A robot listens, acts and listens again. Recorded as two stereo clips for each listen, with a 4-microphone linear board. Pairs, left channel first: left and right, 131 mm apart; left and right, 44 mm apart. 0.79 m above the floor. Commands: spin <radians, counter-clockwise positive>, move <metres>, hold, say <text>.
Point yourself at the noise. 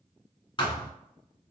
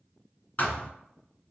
spin 0.70
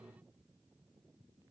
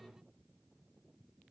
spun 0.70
hold
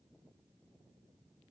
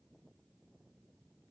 say I heard a thud, but can't make it out now. It was about straight ahead or 100° left.